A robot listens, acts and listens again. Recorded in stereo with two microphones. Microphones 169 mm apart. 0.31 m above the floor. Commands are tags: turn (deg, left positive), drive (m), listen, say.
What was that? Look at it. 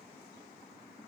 <listen/>
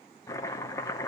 <turn deg="20"/>
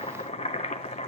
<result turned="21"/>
<turn deg="145"/>
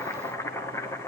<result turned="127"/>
<turn deg="15"/>
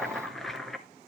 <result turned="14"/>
<say>Facing the chopping, 1 to 2 m away.</say>